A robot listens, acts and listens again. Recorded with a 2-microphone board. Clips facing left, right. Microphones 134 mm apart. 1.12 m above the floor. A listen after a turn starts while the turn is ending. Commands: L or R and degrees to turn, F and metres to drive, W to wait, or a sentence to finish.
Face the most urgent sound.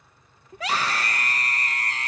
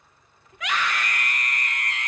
L35
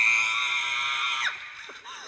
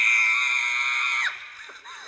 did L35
L10
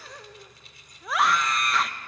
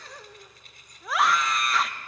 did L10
Found it: a scream, straight ahead.